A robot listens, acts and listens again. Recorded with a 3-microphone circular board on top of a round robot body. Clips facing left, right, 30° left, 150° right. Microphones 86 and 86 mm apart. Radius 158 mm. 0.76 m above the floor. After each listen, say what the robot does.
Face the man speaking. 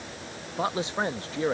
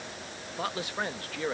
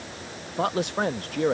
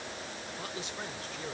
Turn 25° left.
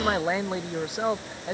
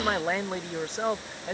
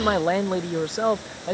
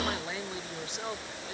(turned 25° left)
Turn 10° left.
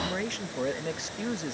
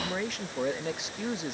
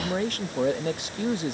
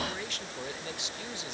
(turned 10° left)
Facing the man speaking.